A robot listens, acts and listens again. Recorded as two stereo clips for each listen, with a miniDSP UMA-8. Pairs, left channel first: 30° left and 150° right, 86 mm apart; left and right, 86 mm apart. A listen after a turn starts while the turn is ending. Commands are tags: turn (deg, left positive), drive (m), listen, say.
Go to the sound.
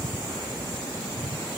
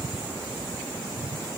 <listen/>
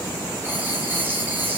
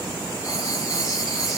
<turn deg="145"/>
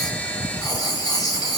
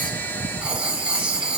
<turn deg="-10"/>
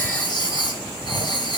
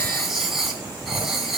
<drive m="1.0"/>
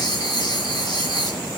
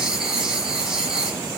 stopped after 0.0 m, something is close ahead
<say>Blocked. The writing is further on, straight ahead.</say>